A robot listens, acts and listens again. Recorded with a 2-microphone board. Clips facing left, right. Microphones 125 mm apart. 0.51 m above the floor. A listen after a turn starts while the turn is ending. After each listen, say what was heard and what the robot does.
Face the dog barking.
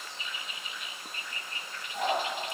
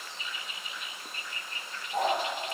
Turn 90° right.
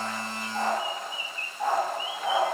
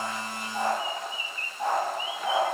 So it is at 15° right. Turn 15° right.
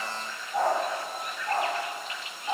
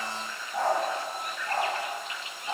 Found it: a dog barking, straight ahead, over 4 m away.